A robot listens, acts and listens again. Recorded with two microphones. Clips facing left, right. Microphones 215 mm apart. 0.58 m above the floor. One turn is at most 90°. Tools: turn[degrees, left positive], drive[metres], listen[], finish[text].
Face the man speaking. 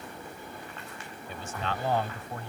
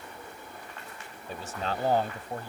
Thought: The man speaking: about 40° right or 140° right.
Action: turn[-40]
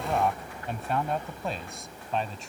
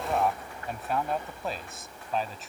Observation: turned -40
Action: finish[Found it: a man speaking, straight ahead.]